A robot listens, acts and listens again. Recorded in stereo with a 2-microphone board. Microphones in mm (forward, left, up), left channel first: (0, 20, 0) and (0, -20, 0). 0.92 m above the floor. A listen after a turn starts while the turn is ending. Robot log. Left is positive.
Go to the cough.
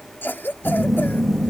note: The cough: about 60° left or 120° left.
cmd yaw +60
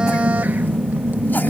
cmd idle
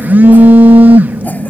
cmd idle
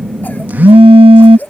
note: So it is at 55° left.
cmd yaw +55
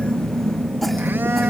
cmd idle
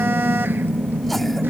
cmd idle
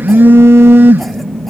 end: I heard a cough from this way, but can't make it out now. I did not reach it.